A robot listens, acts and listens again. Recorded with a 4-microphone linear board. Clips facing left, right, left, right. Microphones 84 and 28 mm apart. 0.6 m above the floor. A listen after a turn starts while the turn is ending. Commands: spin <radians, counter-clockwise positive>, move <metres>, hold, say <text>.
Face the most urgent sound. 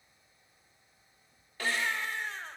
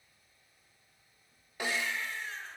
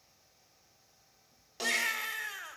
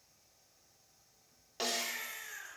spin 1.22
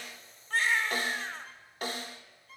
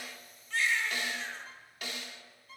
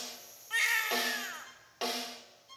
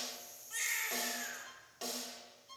spin 0.70
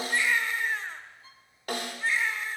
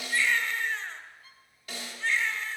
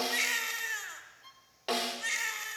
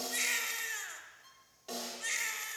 spin 0.17
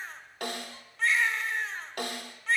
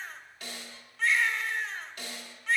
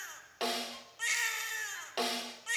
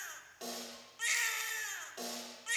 say Found it: a baby crying, straight ahead, 1 to 2 m away.